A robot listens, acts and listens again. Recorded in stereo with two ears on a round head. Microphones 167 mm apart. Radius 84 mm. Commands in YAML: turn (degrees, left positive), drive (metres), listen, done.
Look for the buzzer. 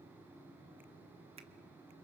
listen: true
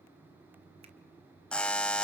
turn: 30
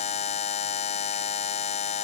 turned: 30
turn: 145
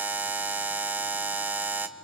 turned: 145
turn: -10
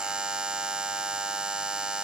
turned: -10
done: "Found it: a buzzer, straight ahead, 1 to 2 m away."